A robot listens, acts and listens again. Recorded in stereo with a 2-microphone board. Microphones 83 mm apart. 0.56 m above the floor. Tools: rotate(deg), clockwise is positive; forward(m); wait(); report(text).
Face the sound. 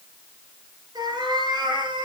rotate(60)
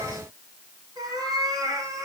rotate(40)
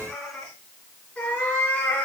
rotate(-15)
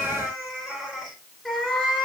report("Found it: a cat meowing, straight ahead, 2 to 4 m away.")